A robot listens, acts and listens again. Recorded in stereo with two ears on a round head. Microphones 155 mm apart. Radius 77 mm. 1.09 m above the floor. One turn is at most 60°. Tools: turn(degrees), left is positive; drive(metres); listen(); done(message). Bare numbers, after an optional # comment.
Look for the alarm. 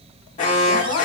# The alarm: about 45° left or 135° left.
turn(45)
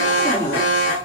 # So it is at 90° left.
turn(60)
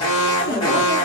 # The alarm is now 25° left.
turn(25)
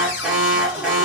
done("Found it: an alarm, straight ahead.")